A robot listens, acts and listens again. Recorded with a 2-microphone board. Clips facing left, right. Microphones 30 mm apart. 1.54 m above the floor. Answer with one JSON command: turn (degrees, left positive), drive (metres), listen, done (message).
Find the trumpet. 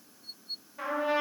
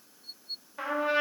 {"turn": -40}
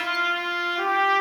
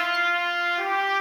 {"turn": -10}
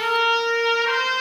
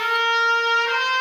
{"done": "Found it: a trumpet, straight ahead, 1 to 2 m away."}